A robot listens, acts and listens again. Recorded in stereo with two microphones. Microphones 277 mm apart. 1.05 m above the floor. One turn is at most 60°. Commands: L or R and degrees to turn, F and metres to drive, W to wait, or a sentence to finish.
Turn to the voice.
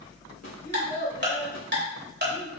L35
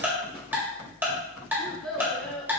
Found it: a child speaking, straight ahead.